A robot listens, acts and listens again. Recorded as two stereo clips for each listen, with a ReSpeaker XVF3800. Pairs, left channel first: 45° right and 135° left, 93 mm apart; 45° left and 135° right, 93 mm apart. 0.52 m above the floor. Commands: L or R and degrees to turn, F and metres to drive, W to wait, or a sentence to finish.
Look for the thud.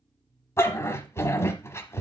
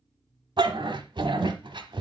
W
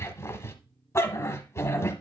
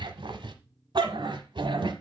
W
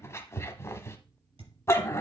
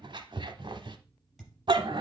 L140
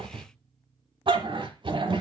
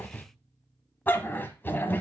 I heard a thud from this way, but can't make it out now.